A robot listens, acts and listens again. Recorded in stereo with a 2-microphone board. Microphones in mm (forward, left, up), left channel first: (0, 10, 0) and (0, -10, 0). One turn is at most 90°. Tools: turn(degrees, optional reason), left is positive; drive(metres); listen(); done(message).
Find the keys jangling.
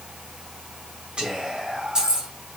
turn(degrees=-45, reason="The keys jangling: about 45° right or 135° right.")
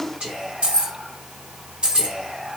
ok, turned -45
turn(degrees=-40, reason="The keys jangling: about 40° right or 140° right.")
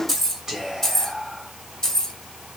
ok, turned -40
turn(degrees=30, reason="So it is at 30° left.")
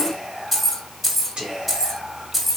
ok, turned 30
done("Facing the keys jangling.")